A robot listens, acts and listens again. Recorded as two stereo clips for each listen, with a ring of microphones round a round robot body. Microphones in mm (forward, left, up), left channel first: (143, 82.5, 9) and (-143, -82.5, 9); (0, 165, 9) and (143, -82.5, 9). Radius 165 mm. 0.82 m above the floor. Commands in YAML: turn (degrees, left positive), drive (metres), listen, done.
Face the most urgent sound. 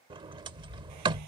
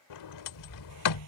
listen: true
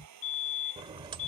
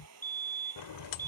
turn: 20
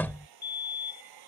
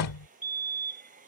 done: "Found it: a fire alarm, straight ahead."